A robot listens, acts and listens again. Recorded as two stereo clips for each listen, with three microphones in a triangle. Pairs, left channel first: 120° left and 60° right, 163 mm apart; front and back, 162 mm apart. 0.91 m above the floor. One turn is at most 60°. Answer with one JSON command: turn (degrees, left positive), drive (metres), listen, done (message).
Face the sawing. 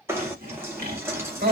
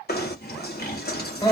{"turn": -25}
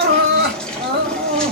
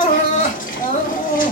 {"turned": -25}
{"listen": true}
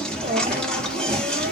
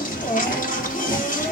{"listen": true}
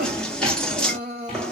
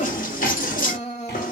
{"done": "I heard sawing from this way, but can't make it out now."}